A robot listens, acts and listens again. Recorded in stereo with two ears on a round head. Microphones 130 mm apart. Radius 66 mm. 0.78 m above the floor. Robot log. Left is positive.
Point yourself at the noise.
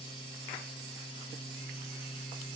cmd idle
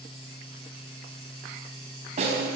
note: The snare drum: about 50° right or 130° right.
cmd yaw -50
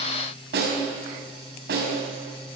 note: So it is at 80° right.
cmd yaw -80
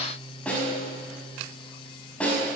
note: The snare drum is now 10° left.
cmd yaw +10
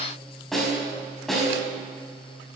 end: Found it: a snare drum, straight ahead.